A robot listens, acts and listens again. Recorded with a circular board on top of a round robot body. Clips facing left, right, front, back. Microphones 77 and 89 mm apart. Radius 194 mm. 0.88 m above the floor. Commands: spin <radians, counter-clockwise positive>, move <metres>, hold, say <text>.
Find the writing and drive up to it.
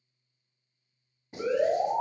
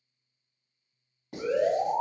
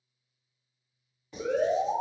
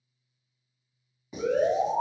spin -1.75
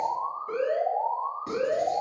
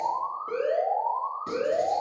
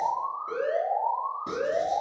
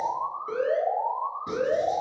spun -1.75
hold
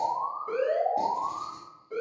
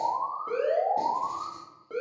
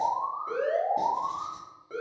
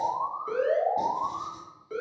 hold
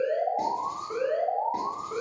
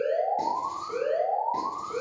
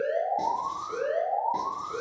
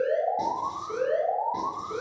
say I heard writing from this way, but can't make it out now. I did not reach it.